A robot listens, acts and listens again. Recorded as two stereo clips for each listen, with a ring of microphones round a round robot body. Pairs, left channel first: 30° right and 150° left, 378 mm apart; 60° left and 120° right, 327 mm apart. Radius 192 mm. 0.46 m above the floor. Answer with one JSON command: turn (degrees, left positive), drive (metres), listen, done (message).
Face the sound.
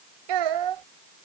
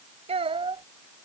{"turn": 165}
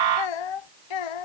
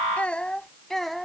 {"turn": -30}
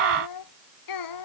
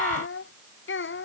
{"done": "Found it: a child speaking, straight ahead."}